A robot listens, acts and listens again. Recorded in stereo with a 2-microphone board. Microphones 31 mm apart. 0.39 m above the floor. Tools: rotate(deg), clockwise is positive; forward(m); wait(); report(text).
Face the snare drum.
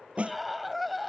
rotate(45)
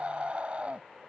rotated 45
wait()
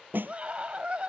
rotate(90)
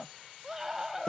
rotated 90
rotate(-30)
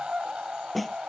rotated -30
report("Facing the snare drum.")